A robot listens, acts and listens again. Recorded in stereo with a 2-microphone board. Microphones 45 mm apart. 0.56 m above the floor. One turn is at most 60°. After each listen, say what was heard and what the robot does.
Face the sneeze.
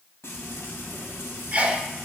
The sneeze: about 35° right or 145° right. Turn 35° right.
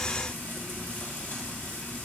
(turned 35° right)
Keep listening.
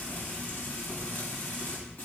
I heard a sneeze, but can't make it out now. It was about straight ahead or 110° right.